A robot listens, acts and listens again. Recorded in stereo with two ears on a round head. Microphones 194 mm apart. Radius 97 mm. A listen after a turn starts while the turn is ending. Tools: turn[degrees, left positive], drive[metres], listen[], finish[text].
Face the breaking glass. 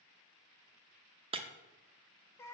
Thought: The breaking glass: about 25° right or 155° right.
Action: turn[-25]
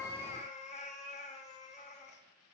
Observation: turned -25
Action: listen[]
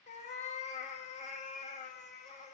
Action: finish[I heard breaking glass, but can't make it out now. It was about straight ahead or 130° right.]